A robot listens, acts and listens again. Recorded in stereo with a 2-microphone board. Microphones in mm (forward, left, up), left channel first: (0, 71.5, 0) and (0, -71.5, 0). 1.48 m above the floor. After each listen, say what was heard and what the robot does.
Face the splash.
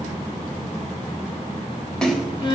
Turn 30° left.
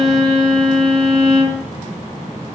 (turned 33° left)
Keep listening.
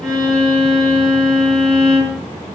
I heard a splash, but can't make it out now. It was about 30° right or 140° left.